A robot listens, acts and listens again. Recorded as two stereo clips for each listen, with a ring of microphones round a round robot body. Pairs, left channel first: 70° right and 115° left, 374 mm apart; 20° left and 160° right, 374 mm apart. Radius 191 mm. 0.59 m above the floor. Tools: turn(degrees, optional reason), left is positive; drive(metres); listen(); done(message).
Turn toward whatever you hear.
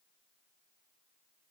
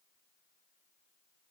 listen()
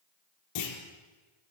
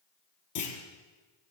turn(degrees=-25, reason="The clunk: 25° right.")
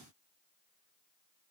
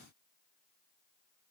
done("Facing where the clunk came from. I can't hear it now.")